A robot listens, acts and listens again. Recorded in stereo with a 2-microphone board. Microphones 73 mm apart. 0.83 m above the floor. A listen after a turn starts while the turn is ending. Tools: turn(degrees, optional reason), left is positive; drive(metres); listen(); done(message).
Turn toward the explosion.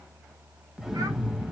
turn(degrees=-30)
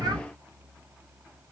listen()
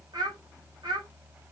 done("I heard an explosion, but can't make it out now. It was about 25° left or 145° right.")